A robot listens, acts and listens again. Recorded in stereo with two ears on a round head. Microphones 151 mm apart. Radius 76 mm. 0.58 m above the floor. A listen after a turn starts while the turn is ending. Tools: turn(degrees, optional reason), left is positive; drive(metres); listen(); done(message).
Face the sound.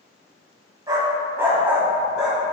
turn(degrees=-30)
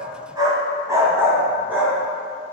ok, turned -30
turn(degrees=-30)
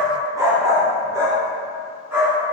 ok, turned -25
turn(degrees=-30)
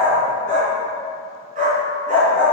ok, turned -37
turn(degrees=-130, reason="So it is at 130° right.")
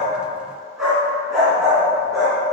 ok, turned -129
done("Found it: a dog barking, straight ahead.")